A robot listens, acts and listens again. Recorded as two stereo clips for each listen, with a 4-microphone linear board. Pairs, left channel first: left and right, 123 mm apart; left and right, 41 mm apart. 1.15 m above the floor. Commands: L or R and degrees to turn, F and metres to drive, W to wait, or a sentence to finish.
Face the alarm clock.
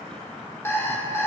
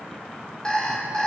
L20
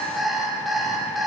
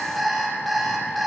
Found it: an alarm clock, straight ahead.